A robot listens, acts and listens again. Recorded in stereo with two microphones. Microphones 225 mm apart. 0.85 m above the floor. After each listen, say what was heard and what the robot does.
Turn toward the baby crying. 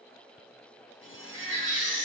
The baby crying: about 60° right or 120° right. Turn 60° right.
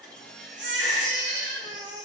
So it is at 55° right. Turn 55° right.
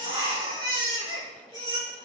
The baby crying is now 20° right. Turn 20° right.
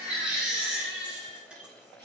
Found it: a baby crying, straight ahead, 2 to 4 m away.